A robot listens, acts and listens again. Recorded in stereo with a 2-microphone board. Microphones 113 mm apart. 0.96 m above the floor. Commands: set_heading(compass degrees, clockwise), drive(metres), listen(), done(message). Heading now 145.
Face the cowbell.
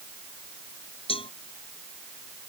set_heading(90)
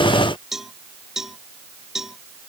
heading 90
done("Facing the cowbell.")